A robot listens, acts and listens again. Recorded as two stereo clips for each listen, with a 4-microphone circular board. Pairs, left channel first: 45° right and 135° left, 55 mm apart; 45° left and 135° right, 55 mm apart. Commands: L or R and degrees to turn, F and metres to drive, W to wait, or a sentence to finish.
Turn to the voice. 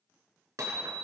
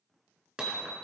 W
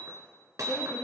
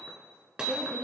R75
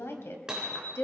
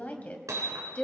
R15
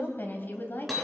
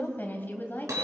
Facing the woman speaking, 2 to 4 m away.